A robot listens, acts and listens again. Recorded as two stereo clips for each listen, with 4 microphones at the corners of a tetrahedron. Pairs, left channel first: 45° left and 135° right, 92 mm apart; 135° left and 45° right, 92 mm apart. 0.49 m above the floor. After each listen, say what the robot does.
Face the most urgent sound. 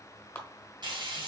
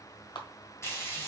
Keep listening.
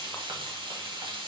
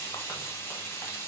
Keep listening.
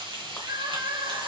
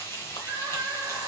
Turn 100° right.
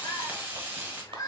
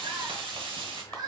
Found it: crying, straight ahead, 1 to 2 m away.